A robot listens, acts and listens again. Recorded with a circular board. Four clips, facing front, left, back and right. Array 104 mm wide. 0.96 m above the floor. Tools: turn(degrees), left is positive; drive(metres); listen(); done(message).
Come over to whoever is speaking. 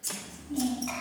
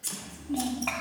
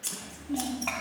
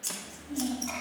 turn(degrees=145)
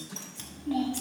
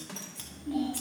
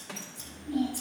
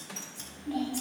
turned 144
drive(metres=1.0)
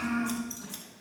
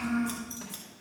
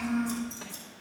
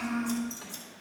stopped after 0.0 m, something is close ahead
done("Something is in my way. I am facing the child speaking but have not reached it.")